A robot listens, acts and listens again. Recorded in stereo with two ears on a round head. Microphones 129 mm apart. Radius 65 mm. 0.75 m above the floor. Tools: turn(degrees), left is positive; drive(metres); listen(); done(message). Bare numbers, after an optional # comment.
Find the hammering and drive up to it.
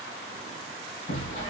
# The hammering: about 60° left or 120° left.
turn(60)
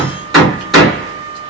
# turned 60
drive(1.0)
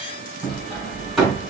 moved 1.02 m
drive(1.0)
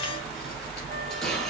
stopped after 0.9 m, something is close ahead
listen()
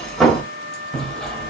done("I am next to the hammering.")